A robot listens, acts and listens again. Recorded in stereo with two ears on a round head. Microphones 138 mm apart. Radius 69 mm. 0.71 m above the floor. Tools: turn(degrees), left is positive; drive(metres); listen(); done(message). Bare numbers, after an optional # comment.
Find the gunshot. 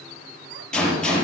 turn(30)
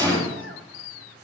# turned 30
# So it is at 25° right.
turn(-25)
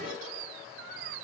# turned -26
done("I heard a gunshot from this way, but can't make it out now.")